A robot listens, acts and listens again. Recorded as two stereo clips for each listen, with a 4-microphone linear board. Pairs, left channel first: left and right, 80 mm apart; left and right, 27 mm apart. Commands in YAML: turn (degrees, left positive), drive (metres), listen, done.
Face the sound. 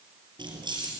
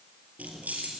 turn: -70
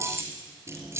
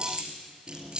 turn: -35
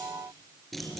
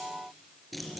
done: "Facing the keys jangling, 2 to 4 m away."